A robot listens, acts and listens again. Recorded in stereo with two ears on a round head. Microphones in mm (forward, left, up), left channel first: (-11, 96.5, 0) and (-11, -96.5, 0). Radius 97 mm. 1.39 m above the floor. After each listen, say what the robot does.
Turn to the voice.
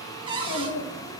Turn 60° left.
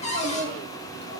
Turn 55° left.
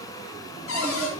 Keep listening.
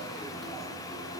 Keep listening.
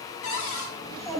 Found it: a child speaking, straight ahead.